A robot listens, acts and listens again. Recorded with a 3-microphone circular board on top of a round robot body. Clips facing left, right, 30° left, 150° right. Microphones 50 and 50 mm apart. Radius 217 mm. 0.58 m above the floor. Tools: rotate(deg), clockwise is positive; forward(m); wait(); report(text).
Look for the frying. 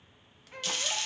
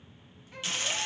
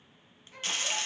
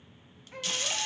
rotate(25)
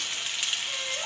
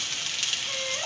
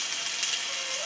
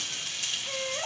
rotate(-10)
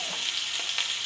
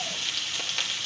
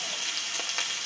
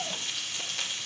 report("Facing the frying, 1 to 2 m away.")